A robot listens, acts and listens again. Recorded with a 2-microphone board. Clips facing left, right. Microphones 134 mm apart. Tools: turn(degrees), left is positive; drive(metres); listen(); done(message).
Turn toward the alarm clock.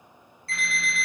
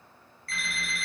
turn(degrees=25)
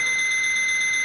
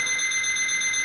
turn(degrees=125)
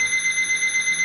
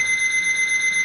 done("Facing the alarm clock.")